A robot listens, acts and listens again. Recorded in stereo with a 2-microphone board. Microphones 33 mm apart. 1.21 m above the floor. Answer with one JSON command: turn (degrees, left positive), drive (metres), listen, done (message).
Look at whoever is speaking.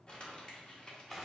{"listen": true}
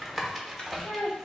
{"turn": 90}
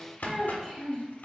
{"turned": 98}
{"turn": -10}
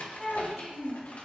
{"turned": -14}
{"done": "Facing the child speaking, 2 to 4 m away."}